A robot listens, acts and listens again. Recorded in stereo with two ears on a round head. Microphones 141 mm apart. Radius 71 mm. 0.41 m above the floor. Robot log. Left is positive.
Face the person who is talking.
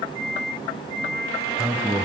cmd yaw -30
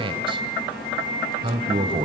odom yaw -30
note: So it is at 140° right.
cmd yaw -140
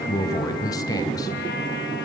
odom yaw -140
note: The man speaking is now 30° left.
cmd yaw +30
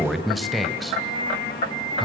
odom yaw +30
end: Found it: a man speaking, straight ahead, 2 to 4 m away.